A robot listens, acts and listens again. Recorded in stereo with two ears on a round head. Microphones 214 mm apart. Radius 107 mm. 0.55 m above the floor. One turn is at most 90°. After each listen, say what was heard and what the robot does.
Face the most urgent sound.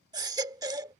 The baby crying: about 15° right or 165° right. Turn 15° right.
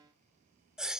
Found it: a baby crying, straight ahead.